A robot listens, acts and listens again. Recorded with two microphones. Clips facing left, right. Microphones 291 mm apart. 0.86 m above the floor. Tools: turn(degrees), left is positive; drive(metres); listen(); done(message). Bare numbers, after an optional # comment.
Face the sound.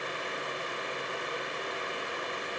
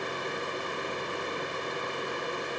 listen()
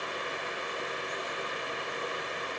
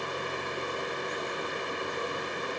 listen()
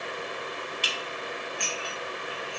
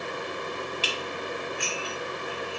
turn(-30)
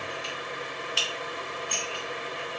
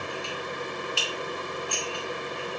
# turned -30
# So it is at 20° left.
turn(20)
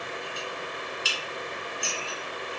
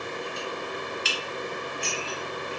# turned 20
done("Facing the dishes clattering, under 1 m away.")